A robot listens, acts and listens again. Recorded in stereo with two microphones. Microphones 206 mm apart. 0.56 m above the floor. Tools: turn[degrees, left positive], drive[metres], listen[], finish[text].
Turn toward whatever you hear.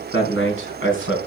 Action: turn[90]
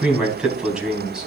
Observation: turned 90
Action: finish[Facing the man speaking, 2 to 4 m away.]